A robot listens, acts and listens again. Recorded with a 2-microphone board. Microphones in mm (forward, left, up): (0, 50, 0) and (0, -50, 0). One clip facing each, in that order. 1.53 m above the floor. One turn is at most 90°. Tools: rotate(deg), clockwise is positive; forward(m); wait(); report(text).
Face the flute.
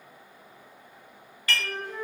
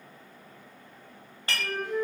rotate(-30)
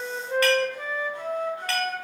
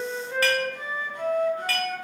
rotate(-90)
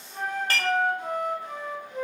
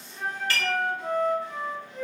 rotate(-90)
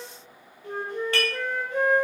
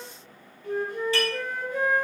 rotate(-30)
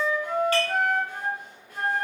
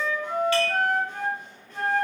rotate(-10)
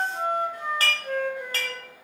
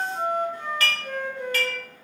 report("Found it: a flute, straight ahead, 2 to 4 m away.")